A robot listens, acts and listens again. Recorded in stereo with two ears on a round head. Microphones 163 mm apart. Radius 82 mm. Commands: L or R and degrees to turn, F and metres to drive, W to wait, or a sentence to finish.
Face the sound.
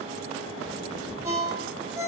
R20
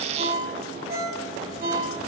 R140
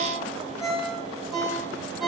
Found it: a ringtone, straight ahead.